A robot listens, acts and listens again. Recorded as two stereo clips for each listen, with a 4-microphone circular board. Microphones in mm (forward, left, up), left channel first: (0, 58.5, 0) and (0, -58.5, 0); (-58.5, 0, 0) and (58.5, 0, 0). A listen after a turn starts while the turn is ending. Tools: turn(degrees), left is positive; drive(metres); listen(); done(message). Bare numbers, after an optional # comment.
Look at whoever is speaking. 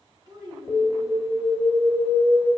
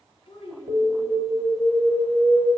# The child speaking: 140° right.
turn(-140)
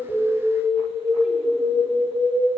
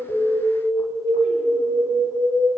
listen()
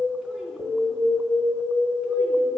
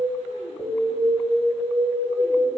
listen()
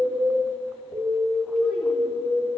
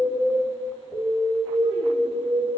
done("I heard a child speaking from this way, but can't make it out now.")